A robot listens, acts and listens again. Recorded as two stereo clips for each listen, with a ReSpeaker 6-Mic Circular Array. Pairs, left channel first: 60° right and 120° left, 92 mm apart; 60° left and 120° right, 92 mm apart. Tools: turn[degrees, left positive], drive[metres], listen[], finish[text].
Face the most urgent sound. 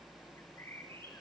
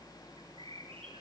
Action: listen[]
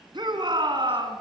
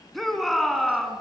Thought: The shout: 150° left.
Action: turn[150]
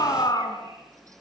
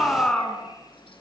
Thought: The shout is now 20° right.
Action: turn[-20]
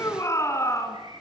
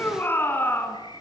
Action: finish[Facing the shout, 2 to 4 m away.]